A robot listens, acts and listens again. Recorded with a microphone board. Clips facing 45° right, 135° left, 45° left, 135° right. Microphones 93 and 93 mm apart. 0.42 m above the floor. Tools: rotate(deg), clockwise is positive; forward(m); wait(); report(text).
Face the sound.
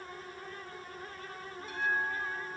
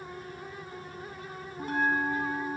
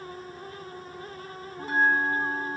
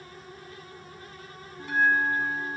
rotate(-95)
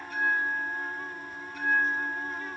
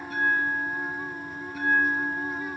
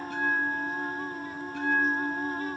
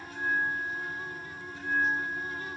rotate(-50)
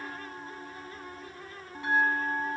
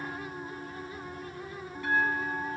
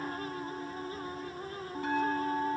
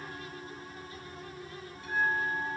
rotate(-20)
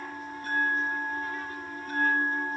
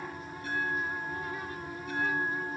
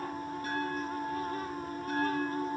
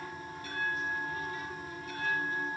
report("Facing the bell, 2 to 4 m away.")